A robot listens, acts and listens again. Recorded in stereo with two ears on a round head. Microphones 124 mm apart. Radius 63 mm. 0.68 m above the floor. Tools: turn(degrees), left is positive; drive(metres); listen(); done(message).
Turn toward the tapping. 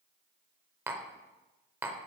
turn(degrees=-20)
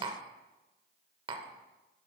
turn(degrees=-145)
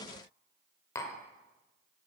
turn(degrees=20)
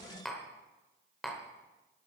done("Found it: tapping, straight ahead, under 1 m away.")